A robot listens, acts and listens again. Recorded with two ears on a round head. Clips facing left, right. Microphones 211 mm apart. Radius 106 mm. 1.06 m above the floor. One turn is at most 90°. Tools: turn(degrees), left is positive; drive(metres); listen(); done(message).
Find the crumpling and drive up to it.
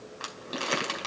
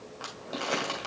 turn(degrees=30)
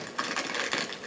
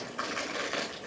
turn(degrees=90)
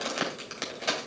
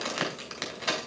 turn(degrees=10)
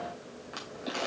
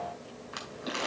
drive(metres=1.0)
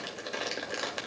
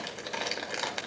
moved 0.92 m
drive(metres=1.0)
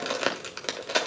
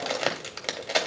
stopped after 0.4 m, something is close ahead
turn(degrees=10)
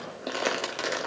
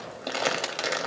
done("I am next to the crumpling.")